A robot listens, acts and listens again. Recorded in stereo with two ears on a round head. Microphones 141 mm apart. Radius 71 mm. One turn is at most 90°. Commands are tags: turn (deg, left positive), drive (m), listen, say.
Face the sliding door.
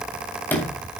<turn deg="30"/>
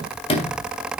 <turn deg="90"/>
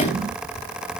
<turn deg="45"/>
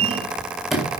<say>Found it: a sliding door, straight ahead, 2 to 4 m away.</say>